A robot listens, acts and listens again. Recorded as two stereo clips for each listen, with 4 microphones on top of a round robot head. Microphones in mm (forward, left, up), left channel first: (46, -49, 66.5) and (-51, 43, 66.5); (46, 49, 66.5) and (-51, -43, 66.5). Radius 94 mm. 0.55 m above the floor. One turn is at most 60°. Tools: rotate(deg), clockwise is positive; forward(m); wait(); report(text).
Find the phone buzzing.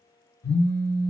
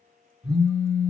rotate(50)
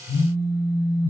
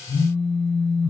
rotate(10)
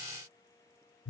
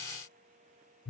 report("Found it: a phone buzzing, straight ahead, 2 to 4 m away.")